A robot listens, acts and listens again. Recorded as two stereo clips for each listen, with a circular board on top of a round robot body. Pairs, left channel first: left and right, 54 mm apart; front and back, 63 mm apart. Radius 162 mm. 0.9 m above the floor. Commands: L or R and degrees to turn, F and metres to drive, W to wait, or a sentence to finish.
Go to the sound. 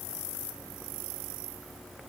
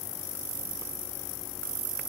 W
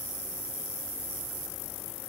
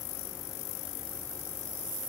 W
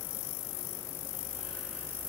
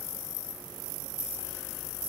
I can't make out anything.